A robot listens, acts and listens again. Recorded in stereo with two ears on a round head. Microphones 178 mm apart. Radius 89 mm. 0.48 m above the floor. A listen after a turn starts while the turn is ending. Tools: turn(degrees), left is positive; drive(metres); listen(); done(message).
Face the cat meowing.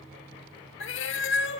turn(degrees=65)
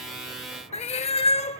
turn(degrees=35)
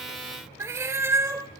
turn(degrees=-15)
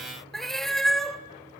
done("Facing the cat meowing, under 1 m away.")